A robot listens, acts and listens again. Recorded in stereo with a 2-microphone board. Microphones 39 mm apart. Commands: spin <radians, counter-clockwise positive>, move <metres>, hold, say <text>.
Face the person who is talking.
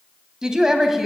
spin -0.52
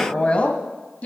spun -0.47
spin 0.70
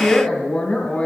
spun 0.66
spin 0.52
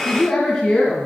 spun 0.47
spin 0.26
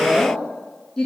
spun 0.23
spin 0.17
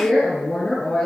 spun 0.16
say Facing the woman speaking.